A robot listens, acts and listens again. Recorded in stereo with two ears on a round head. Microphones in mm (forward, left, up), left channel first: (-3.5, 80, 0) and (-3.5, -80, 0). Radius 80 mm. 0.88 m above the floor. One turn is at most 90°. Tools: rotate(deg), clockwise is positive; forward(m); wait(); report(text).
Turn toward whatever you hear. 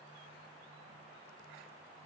wait()
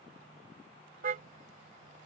rotate(55)
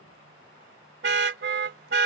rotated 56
rotate(70)
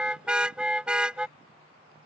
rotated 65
report("Found it: a car horn, straight ahead.")